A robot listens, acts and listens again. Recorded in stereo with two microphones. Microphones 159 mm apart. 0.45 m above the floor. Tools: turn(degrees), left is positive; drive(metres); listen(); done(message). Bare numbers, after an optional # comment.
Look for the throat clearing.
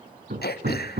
turn(90)
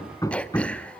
done("Facing the throat clearing.")